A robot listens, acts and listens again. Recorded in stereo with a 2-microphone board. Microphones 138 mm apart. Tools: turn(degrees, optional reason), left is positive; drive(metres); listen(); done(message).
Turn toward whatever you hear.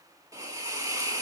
turn(degrees=-25, reason="The hiss: about 25° right or 155° right.")
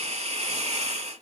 turn(degrees=-130, reason="So it is at 130° right.")
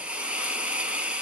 turn(degrees=-10, reason="The hiss is now 10° right.")
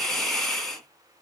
done("Facing the hiss.")